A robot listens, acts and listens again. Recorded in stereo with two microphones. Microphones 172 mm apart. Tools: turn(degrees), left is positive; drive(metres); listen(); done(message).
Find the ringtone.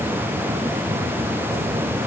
listen()
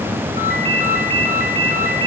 turn(degrees=60)
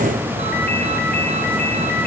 listen()
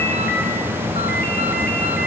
listen()
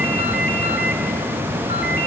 done("I heard a ringtone, but can't make it out now. It was about straight ahead or 60° left.")